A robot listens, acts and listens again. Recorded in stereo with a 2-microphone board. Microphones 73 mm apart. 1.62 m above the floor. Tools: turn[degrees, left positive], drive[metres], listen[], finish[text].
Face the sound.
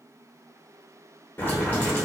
Thought: The boiling: about 25° left or 155° left.
Action: turn[25]
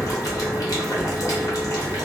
Thought: So it is at 130° left.
Action: turn[130]
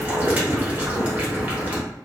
Thought: The boiling is now 20° right.
Action: turn[-20]
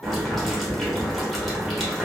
Action: finish[Found it: boiling, straight ahead, under 1 m away.]